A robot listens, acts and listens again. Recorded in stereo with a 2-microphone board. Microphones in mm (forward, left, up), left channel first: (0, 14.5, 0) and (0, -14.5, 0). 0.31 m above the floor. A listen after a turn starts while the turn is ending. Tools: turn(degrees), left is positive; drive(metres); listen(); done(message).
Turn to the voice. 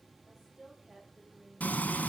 turn(degrees=-30)
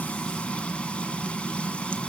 listen()
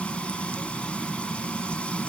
listen()
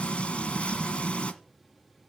done("I heard a woman speaking, but can't make it out now. It was about 25° left or 145° right.")